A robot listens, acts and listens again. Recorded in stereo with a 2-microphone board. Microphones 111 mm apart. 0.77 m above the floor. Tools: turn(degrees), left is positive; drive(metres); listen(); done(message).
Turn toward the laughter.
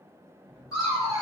turn(degrees=30)
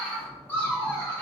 turn(degrees=25)
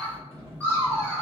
turn(degrees=25)
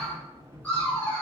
turn(degrees=20)
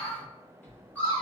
turn(degrees=15)
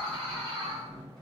done("Found it: laughter, straight ahead.")